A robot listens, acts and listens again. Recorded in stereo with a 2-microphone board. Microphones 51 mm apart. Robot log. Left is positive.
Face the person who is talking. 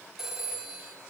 cmd idle
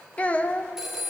note: The child speaking: about 25° left or 155° left.
cmd yaw +25
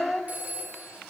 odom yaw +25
end: Facing the child speaking.